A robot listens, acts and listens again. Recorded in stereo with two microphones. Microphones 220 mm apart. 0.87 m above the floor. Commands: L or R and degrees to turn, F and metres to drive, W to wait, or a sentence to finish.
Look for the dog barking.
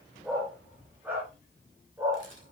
R30
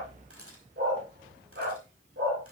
R120
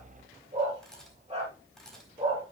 R25
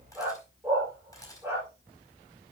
R10
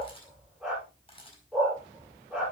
Found it: a dog barking, straight ahead.